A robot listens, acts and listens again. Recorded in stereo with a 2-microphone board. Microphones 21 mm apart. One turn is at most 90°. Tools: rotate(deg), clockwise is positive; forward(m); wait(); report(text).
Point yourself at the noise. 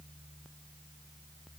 wait()
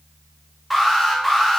rotate(30)
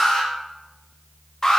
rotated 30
rotate(-25)
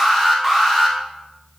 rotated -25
rotate(10)
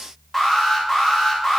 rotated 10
report("Found it: an alarm, straight ahead.")